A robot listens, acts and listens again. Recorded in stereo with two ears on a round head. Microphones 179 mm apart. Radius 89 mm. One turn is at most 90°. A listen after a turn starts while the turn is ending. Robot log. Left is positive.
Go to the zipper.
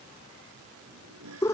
cmd yaw -90
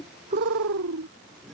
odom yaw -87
cmd fwd 1.0
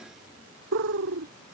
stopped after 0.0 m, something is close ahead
cmd idle
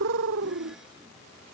cmd idle
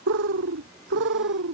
end: Facing where the zipper came from. I can't hear it now. I did not reach it.